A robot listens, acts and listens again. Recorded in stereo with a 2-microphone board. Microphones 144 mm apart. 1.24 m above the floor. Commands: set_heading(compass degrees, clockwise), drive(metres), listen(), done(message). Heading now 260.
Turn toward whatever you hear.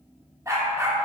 set_heading(280)
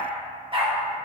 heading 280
set_heading(55)
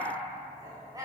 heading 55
set_heading(80)
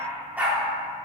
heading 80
set_heading(90)
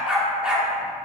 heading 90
done("Found it: a dog barking, straight ahead, 1 to 2 m away.")